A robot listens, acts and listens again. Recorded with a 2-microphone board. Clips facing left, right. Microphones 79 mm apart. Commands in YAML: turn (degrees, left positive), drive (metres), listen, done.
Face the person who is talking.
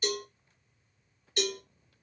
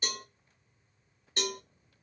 listen: true
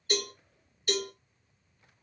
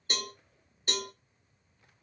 listen: true
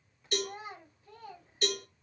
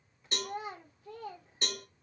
turn: -90
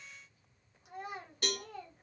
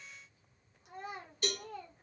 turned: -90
done: "Found it: a child speaking, straight ahead."